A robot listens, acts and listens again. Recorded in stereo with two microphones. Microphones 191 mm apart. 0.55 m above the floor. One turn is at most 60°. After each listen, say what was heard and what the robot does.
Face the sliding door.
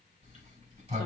The sliding door: about 35° right or 145° right. Turn 35° right.
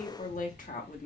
So it is at 100° right. Turn 60° right.
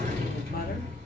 The sliding door is now 45° right. Turn 45° right.
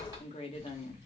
The sliding door is now 15° right. Turn 15° right.
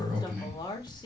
Found it: a sliding door, straight ahead.